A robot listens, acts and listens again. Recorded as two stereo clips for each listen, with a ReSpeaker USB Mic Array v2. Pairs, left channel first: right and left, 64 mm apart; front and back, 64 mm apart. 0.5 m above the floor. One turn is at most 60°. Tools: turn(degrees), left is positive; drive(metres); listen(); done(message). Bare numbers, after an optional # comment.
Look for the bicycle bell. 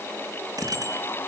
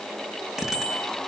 # The bicycle bell: 100° left.
turn(60)
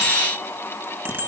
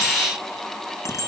# The bicycle bell is now 35° left.
turn(35)
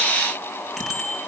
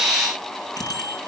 done("Found it: a bicycle bell, straight ahead.")